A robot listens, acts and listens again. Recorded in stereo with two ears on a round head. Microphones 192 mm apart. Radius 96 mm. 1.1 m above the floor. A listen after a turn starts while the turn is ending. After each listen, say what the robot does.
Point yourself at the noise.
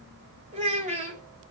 Turn 35° right.
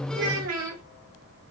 Turn 100° right.
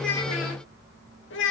Turn 60° left.
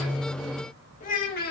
Turn 45° left.
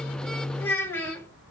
Turn 10° left.
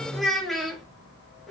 Facing the child speaking.